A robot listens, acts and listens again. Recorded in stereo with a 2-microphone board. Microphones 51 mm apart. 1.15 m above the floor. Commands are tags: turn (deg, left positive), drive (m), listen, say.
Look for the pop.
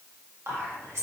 <listen/>
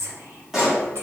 <turn deg="-30"/>
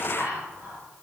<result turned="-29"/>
<listen/>
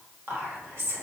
<say>I heard a pop, but can't make it out now. It was about 20° left or 145° right.</say>